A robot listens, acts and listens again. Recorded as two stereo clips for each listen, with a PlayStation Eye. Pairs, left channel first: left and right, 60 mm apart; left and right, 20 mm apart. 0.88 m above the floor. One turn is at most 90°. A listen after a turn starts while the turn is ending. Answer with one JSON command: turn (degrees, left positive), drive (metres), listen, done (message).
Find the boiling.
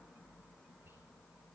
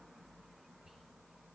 {"listen": true}
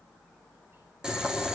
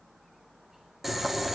{"turn": -30}
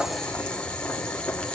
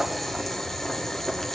{"turn": 15}
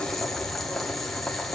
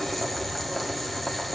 {"done": "Facing the boiling, 1 to 2 m away."}